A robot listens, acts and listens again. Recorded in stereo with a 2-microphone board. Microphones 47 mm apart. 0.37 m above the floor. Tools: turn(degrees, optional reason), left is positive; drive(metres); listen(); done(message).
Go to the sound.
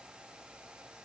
listen()
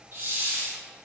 turn(degrees=-55, reason="The hiss: about 55° right or 125° right.")
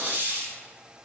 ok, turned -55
turn(degrees=-50, reason="So it is at 50° right.")
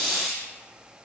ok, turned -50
turn(degrees=15, reason="The hiss is now 15° left.")
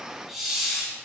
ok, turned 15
drive(metres=1.0)
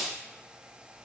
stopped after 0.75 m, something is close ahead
turn(degrees=-10, reason="The hiss is now 10° right.")
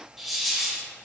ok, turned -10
done("Arrived at the hiss, straight ahead.")